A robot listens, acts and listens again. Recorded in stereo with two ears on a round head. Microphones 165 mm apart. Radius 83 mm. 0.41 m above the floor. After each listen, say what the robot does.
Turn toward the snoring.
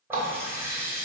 Keep listening.
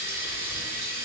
Keep listening.
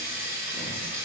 I can't make out snoring to turn to.